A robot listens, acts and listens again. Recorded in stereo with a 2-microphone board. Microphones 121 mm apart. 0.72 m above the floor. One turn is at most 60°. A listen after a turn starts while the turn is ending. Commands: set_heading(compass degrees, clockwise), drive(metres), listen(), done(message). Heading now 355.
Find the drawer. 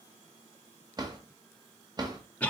set_heading(30)
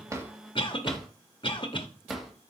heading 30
done("Found it: a drawer, straight ahead.")